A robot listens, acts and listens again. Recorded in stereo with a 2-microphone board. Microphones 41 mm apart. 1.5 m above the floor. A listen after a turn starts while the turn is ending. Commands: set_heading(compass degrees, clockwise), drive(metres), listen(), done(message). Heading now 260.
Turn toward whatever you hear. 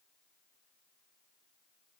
listen()
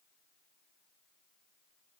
listen()
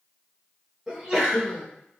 set_heading(280)
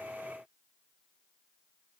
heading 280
listen()
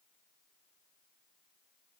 done("I heard a sneeze, but can't make it out now. It was about straight ahead or 140° right.")